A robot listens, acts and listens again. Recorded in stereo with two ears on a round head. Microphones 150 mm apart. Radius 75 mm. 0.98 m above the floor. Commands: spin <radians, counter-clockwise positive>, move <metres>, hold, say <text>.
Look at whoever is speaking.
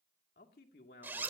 spin 1.22
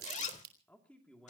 say Facing the man speaking.